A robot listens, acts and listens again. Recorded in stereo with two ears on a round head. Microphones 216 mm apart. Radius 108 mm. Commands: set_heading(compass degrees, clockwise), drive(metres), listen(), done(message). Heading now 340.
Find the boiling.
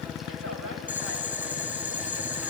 set_heading(10)
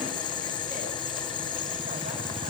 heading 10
set_heading(350)
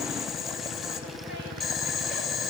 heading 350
done("Found it: boiling, straight ahead.")